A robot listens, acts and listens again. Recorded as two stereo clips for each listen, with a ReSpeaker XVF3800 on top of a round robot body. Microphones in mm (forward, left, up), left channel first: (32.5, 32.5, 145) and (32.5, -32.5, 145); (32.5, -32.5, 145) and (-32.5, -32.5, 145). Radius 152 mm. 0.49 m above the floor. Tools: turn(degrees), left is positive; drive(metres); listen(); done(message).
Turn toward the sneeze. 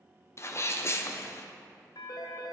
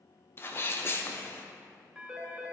turn(degrees=50)
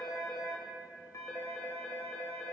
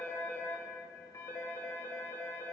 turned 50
done("Facing where the sneeze came from. I can't hear it now.")